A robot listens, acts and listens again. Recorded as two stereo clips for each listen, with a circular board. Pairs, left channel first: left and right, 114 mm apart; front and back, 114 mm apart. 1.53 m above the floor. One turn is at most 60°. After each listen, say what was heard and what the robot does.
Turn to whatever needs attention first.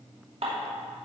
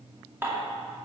Keep listening.
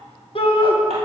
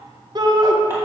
The shout: 125° left. Turn 60° left.
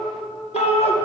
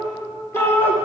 The shout is now 70° left. Turn 60° left.
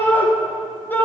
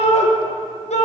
The shout is now 15° left. Turn 15° left.
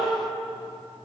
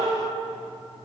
Keep listening.
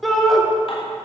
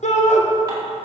Found it: a shout, straight ahead, 1 to 2 m away.